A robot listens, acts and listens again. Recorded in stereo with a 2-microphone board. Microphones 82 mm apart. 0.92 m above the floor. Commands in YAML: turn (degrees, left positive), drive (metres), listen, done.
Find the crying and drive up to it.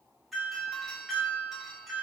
listen: true
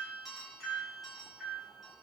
listen: true
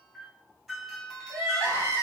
turn: -40
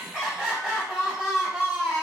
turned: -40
drive: 1.0
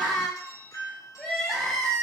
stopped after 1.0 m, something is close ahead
done: "I am next to the crying."